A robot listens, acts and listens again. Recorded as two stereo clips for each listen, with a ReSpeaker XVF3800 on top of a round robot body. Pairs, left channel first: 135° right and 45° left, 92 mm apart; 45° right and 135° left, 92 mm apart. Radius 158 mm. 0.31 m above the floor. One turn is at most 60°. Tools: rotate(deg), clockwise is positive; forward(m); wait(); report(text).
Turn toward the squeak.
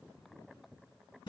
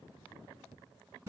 wait()
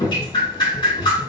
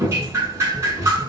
wait()
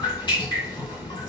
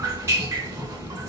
report("I can't make out a squeak to turn to.")